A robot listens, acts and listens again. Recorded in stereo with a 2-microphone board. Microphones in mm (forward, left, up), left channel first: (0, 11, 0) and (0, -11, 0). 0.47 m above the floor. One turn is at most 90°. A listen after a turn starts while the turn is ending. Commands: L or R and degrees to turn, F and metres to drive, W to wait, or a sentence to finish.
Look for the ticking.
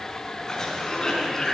W
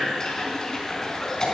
W
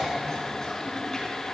I can't make out ticking, only a cough.